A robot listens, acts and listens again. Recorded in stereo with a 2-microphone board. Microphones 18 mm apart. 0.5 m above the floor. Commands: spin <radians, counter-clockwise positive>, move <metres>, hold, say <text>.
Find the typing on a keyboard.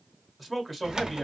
spin -0.87
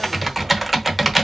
spin -0.17
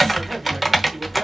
say Facing the typing on a keyboard.